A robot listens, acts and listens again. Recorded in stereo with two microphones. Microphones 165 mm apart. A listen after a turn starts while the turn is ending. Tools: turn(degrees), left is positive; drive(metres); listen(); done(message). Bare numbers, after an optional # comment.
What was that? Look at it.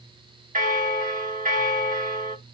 # The bell: about 50° right or 130° right.
turn(-50)
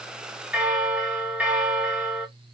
# So it is at 10° right.
turn(-10)
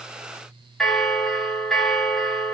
done("Found it: a bell, straight ahead, under 1 m away.")